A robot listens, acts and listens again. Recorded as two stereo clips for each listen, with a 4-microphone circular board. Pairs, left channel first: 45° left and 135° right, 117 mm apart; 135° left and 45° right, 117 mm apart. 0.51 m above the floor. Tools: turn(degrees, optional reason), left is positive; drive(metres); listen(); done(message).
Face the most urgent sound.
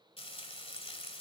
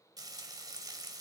listen()
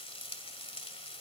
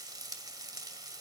listen()
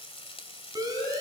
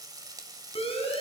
turn(degrees=170, reason="The siren: 170° left.")
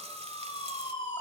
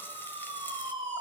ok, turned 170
done("Facing the siren.")